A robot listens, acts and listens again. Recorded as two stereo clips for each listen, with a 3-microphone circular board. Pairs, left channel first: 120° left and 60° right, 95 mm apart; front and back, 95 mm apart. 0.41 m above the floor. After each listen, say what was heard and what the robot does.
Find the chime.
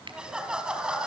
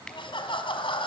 Keep listening.
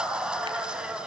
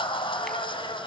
Keep listening.
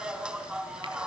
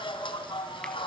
I can't make out a chime, only laughter.